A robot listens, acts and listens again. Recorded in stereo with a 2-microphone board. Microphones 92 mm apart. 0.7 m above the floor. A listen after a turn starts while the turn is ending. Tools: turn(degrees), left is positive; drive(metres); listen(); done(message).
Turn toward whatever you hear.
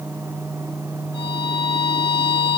turn(degrees=60)
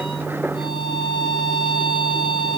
turn(degrees=60)
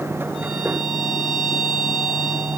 done("Found it: a violin, straight ahead, over 4 m away.")